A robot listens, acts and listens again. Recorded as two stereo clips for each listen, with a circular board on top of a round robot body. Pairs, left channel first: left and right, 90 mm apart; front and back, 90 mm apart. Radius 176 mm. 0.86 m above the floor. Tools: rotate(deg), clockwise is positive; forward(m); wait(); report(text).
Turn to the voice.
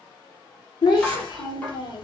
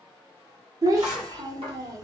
rotate(-125)
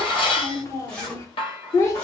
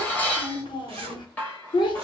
rotate(-30)
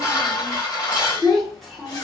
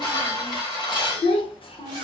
report("Facing the child speaking, under 1 m away.")